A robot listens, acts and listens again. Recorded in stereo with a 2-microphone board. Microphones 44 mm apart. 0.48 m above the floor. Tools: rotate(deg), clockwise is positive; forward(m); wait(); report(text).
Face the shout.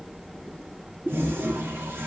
wait()
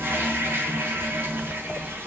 wait()
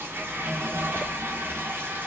report("I can't make out a shout, only a toilet flushing.")